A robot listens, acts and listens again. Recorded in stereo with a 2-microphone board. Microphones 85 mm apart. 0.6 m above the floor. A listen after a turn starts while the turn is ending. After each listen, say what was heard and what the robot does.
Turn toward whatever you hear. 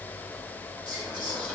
Turn 30° right.
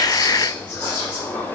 So it is at 20° left. Turn 20° left.
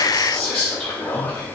Facing the whispering.